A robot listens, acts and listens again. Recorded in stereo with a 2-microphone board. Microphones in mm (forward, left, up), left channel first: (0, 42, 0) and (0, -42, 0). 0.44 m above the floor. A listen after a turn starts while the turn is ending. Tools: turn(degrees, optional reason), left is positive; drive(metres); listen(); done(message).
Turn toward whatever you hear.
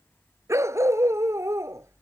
turn(degrees=-35, reason="The dog barking: about 35° right or 145° right.")
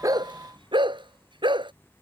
turn(degrees=-110, reason="So it is at 110° right.")
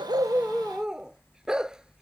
done("Facing the dog barking.")